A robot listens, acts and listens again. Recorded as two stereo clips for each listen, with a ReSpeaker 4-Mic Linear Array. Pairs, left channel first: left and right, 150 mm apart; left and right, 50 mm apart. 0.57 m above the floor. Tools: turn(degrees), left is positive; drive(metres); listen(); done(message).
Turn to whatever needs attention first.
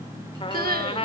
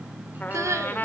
turn(degrees=-90)
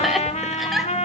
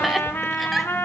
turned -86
done("Found it: crying, straight ahead.")